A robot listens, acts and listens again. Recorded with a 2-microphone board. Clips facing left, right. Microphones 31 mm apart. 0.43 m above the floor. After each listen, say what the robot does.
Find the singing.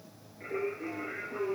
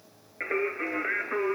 Turn 90° right.
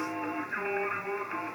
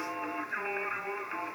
Facing the singing.